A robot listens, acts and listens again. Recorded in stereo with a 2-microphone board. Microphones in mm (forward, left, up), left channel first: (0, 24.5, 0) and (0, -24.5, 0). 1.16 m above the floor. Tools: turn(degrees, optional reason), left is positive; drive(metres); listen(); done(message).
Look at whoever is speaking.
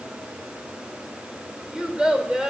turn(degrees=-30)
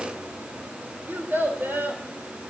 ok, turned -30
turn(degrees=-135, reason="So it is at 135° right.")
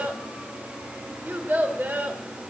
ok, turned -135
turn(degrees=-45, reason="The child speaking is now 45° right.")
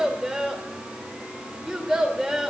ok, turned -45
turn(degrees=-10, reason="The child speaking is now 10° right.")
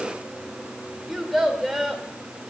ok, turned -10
done("Found it: a child speaking, straight ahead, 2 to 4 m away.")